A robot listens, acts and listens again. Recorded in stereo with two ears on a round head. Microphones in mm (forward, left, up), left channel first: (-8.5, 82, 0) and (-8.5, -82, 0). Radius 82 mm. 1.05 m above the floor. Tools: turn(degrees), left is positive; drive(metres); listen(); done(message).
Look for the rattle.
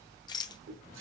turn(degrees=25)
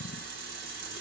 listen()
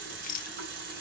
turn(degrees=130)
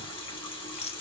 turn(degrees=35)
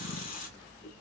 listen()
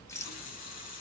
turn(degrees=15)
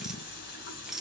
done("Facing the rattle.")